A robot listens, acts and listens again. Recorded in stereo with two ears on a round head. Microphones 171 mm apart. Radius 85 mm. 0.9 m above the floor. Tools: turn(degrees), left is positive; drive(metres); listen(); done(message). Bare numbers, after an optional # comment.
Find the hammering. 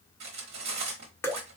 listen()
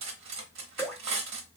listen()
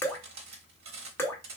done("I can't make out hammering, only cutlery clinking and dripping.")